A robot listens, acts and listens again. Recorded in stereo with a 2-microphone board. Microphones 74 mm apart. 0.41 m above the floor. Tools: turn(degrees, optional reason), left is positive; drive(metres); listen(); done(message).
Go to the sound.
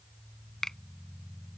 turn(degrees=30)
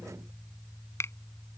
turn(degrees=140, reason="So it is at 140° left.")
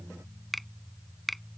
drive(metres=1.0)
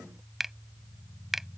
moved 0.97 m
drive(metres=1.0)
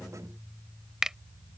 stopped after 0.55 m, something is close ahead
turn(degrees=-10, reason="The finger snap is now 10° right.")
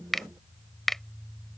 done("Arrived at the finger snap, straight ahead.")